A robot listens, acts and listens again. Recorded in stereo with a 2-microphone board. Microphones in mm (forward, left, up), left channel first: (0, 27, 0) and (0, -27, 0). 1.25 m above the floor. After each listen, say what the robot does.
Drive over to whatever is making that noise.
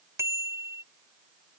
Turn 60° right.
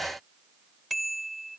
Drive 1.0 m forward.
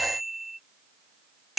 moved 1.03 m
Drive 1.0 m forward.
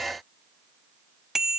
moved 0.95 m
Drive 1.0 m forward.
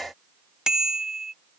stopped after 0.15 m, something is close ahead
Turn 10° right.
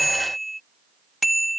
Arrived at the bicycle bell, straight ahead.